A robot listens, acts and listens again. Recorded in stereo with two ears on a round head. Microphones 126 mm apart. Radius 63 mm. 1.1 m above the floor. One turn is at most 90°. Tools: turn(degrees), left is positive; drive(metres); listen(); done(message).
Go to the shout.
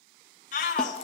turn(degrees=60)
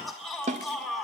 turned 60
drive(metres=1.0)
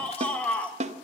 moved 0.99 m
turn(degrees=10)
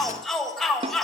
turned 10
drive(metres=1.0)
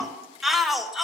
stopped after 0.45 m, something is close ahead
done("Arrived at the shout, straight ahead.")